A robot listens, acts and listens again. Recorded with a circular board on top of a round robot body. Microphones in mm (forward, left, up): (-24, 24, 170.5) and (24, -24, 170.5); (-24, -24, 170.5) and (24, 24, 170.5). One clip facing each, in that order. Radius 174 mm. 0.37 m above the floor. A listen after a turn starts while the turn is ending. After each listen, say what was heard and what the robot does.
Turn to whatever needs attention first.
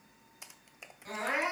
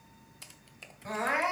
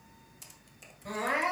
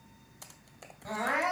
The crying: 20° left. Turn 20° left.
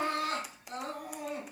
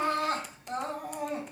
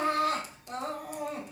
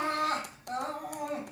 Found it: crying, straight ahead.